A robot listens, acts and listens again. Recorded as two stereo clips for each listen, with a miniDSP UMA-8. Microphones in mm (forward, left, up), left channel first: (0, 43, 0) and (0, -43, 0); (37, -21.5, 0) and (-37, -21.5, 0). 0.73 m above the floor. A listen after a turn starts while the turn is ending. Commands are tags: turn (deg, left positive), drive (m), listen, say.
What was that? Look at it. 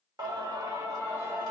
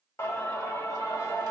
<turn deg="-30"/>
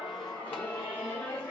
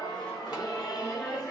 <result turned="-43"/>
<turn deg="30"/>
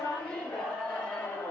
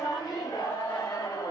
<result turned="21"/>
<turn deg="20"/>
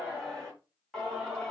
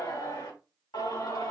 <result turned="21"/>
<say>Facing the singing, 2 to 4 m away.</say>